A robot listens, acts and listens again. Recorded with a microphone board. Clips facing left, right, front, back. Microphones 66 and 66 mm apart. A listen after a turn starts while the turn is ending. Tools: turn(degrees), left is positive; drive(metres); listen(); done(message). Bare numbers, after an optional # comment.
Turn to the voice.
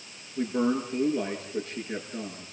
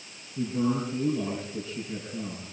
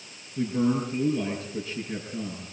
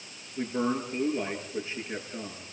# The man speaking: 120° left.
turn(120)
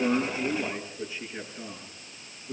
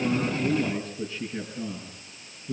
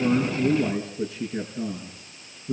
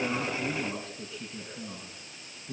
# The man speaking is now 10° left.
turn(10)
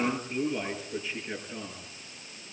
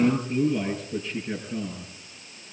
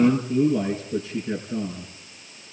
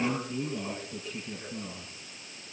done("Found it: a man speaking, straight ahead, over 4 m away.")